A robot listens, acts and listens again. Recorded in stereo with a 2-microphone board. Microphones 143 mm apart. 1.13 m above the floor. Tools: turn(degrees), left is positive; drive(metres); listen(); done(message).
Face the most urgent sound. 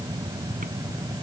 listen()
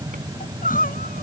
turn(degrees=90)
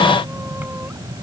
listen()
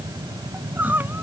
turn(degrees=-15)
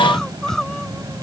done("Found it: crying, straight ahead.")